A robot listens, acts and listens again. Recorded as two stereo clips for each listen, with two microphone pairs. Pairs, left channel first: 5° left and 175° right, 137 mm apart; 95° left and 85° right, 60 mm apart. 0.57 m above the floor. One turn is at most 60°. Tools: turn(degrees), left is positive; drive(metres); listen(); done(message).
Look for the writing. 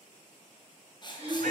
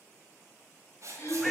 turn(degrees=-50)
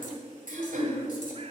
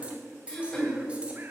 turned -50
turn(degrees=-15)
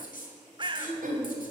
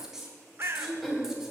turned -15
done("Facing the writing.")